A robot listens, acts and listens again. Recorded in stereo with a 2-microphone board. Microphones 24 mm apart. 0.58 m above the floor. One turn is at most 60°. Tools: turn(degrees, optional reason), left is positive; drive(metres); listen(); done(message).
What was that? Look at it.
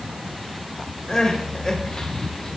turn(degrees=35, reason="The crying: about 35° left or 145° left.")
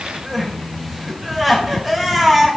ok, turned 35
done("Found it: crying, straight ahead, 1 to 2 m away.")